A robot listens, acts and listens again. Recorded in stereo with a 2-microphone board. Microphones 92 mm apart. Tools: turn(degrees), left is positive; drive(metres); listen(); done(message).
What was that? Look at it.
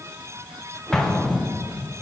turn(degrees=30)
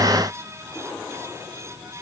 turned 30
listen()
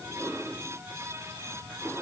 done("I heard an explosion, but can't make it out now. It was about 25° right or 145° left.")